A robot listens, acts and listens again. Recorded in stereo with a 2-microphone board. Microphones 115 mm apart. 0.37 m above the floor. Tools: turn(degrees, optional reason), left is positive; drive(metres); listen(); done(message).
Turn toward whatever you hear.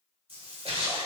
turn(degrees=-55, reason="The splash: about 55° right or 125° right.")
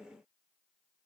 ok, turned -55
listen()
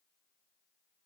done("I heard a splash, but can't make it out now. It was about straight ahead or 70° right.")